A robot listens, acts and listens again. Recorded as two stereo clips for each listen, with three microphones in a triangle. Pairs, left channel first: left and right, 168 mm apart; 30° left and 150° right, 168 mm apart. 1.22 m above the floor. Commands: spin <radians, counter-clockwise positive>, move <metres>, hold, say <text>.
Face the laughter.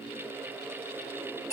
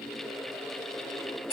hold
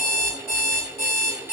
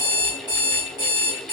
hold
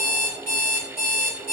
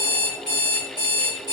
say I can't make out laughter to turn to.